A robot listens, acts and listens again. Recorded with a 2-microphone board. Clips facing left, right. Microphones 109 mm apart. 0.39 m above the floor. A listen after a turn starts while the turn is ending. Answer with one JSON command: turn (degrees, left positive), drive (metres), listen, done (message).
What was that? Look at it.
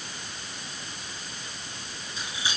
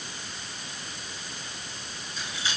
{"turn": 30}
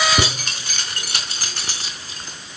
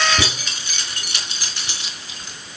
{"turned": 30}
{"turn": 140}
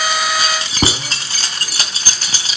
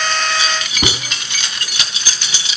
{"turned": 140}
{"turn": 40}
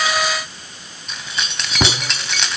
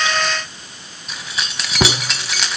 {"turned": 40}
{"done": "Found it: keys jangling, straight ahead."}